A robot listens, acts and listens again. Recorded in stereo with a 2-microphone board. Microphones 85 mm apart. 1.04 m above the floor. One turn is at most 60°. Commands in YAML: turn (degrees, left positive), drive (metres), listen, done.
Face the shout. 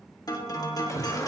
turn: 40
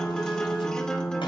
listen: true
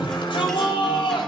turn: 60
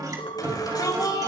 turn: 50
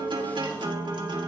listen: true
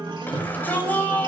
turn: 20
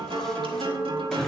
done: "Facing the shout."